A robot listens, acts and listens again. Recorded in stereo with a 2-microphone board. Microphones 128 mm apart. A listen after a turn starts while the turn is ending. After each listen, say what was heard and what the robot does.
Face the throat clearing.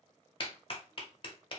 Keep listening.
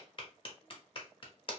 Keep listening.
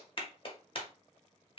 I can't make out throat clearing, only a clap.